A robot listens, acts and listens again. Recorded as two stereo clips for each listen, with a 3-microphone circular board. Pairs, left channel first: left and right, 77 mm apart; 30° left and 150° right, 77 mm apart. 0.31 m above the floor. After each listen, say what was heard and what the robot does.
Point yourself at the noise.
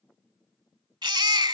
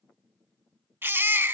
The baby crying: 90° right. Turn 90° right.
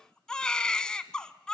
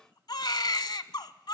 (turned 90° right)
The baby crying is now 10° left. Turn 10° left.
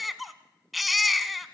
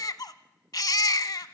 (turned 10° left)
Facing the baby crying, under 1 m away.